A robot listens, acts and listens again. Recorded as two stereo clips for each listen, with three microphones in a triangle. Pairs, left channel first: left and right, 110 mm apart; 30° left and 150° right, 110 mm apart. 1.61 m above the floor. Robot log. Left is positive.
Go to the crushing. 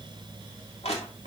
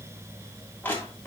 note: The crushing: 105° left.
cmd yaw +105
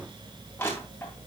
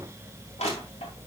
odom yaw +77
note: The crushing is now 25° left.
cmd yaw +25
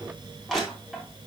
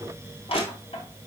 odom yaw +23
cmd fwd 1.0
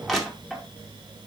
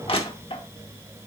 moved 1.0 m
cmd fwd 1.0
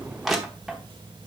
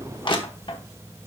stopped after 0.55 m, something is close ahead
end: I am next to the crushing.